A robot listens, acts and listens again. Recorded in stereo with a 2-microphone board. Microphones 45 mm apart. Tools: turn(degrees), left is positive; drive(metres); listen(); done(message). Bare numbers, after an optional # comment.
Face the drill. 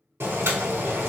listen()
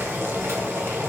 listen()
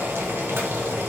done("I can't make out a drill to turn to.")